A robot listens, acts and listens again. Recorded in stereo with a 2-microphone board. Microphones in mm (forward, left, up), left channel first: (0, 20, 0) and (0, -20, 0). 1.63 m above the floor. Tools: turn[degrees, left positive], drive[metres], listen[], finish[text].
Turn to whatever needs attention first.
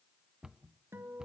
Action: listen[]
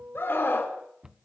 Thought: The scream: about 60° left or 120° left.
Action: turn[60]
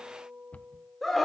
Action: finish[Found it: a scream, straight ahead.]